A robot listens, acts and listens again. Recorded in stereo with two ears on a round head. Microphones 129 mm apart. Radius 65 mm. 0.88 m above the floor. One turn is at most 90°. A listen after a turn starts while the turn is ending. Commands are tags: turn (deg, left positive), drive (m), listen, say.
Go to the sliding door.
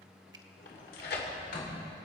<turn deg="70"/>
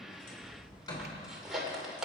<turn deg="30"/>
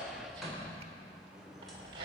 <drive m="1.0"/>
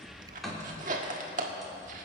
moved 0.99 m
<drive m="1.0"/>
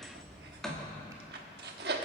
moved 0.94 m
<drive m="1.0"/>
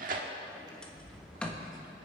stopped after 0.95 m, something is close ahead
<turn deg="10"/>
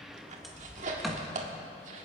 <say>I am next to the sliding door.</say>